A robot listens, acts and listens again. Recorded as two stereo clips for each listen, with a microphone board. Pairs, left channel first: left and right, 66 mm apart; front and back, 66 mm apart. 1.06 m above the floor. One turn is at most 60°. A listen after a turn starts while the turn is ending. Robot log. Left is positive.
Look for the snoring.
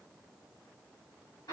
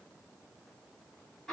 cmd idle
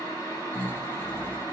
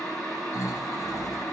note: The snoring: 25° left.
cmd yaw +25
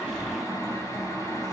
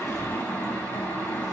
end: Found it: snoring, straight ahead, 1 to 2 m away.